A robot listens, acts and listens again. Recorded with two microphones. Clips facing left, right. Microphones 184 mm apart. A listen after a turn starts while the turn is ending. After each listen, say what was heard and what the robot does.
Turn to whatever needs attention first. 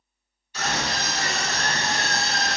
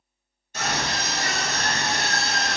The scream: about 45° right or 135° right. Turn 45° right.
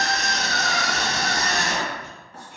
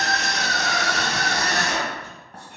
So it is at 10° right. Turn 10° right.
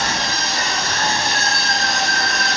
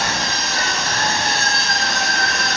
Found it: a scream, straight ahead.